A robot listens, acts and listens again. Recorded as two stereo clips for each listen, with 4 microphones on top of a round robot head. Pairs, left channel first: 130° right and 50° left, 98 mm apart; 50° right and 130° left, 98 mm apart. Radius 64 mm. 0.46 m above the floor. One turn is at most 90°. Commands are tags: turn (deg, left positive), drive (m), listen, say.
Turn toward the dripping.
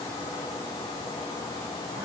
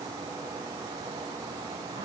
<listen/>
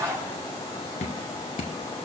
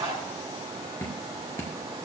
<turn deg="-90"/>
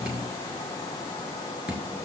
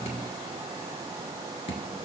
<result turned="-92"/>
<turn deg="-25"/>
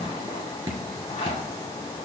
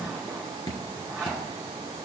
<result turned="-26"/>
<say>Found it: dripping, straight ahead.</say>